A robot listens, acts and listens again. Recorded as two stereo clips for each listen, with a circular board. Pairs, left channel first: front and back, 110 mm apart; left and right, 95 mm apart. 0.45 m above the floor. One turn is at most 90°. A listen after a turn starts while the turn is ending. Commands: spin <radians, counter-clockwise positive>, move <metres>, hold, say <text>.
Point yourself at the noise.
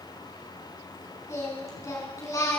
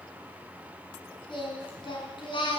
spin 1.05
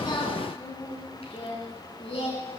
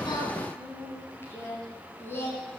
spin 0.44
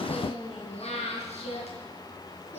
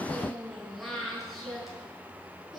say Found it: singing, straight ahead.